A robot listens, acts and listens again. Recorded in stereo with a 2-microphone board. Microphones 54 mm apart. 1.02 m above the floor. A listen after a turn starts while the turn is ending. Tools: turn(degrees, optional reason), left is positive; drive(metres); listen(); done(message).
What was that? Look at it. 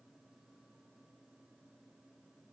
listen()
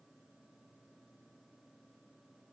listen()
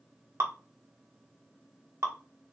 turn(degrees=-60, reason="The dripping: about 60° right or 120° right.")
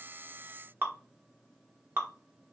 turn(degrees=-50, reason="So it is at 50° right.")
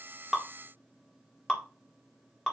turn(degrees=10, reason="The dripping is now 10° left.")
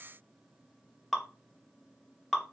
done("Found it: dripping, straight ahead.")